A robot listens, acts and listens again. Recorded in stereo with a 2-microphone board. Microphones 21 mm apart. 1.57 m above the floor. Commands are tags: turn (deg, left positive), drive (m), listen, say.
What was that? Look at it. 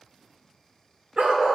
<turn deg="-60"/>
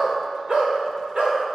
<turn deg="-55"/>
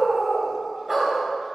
<turn deg="-20"/>
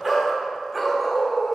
<say>Found it: a dog barking, straight ahead.</say>